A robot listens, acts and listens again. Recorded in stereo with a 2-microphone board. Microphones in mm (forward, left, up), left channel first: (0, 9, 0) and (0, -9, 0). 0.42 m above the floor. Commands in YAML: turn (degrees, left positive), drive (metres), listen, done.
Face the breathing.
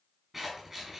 listen: true
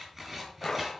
turn: 20
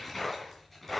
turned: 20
done: "Facing the breathing."